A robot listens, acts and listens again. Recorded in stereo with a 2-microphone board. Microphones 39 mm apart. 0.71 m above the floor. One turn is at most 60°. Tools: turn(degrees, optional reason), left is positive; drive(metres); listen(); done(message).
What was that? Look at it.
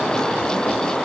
listen()
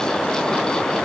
listen()
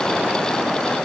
done("I can't make out anything.")